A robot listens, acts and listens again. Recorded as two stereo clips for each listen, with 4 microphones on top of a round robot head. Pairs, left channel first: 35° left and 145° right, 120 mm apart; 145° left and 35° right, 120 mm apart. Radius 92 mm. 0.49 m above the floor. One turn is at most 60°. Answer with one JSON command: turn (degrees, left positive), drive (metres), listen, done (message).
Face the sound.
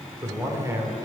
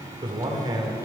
{"turn": -60}
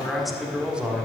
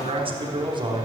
{"turn": -60}
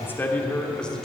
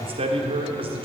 {"turn": -50}
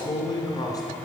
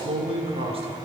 {"turn": -20}
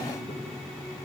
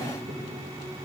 {"listen": true}
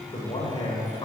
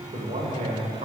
{"turn": -15}
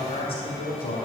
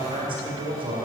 {"done": "Found it: a man speaking, straight ahead."}